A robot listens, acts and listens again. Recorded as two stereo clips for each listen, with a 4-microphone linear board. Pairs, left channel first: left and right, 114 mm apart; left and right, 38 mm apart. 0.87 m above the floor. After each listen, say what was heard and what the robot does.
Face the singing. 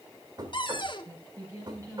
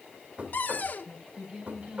The singing: about 30° right or 150° right. Turn 30° right.
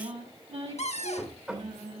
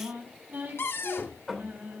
So it is at 110° right. Turn 110° right.
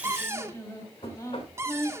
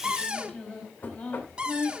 The singing is now 35° left. Turn 35° left.
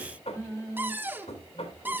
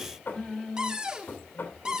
The singing is now 25° left. Turn 25° left.
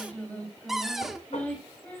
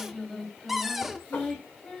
The singing is now 15° left. Turn 15° left.
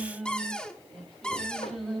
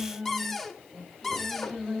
Found it: singing, straight ahead, 2 to 4 m away.